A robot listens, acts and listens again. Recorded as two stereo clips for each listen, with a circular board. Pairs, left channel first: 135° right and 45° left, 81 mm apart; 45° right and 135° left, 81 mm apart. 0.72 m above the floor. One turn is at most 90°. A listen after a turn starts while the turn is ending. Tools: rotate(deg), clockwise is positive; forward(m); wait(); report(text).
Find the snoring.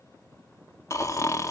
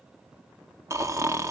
rotate(-90)
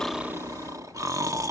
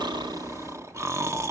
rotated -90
rotate(-85)
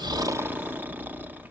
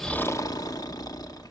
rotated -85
rotate(20)
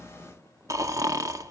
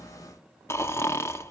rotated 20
report("Found it: snoring, straight ahead.")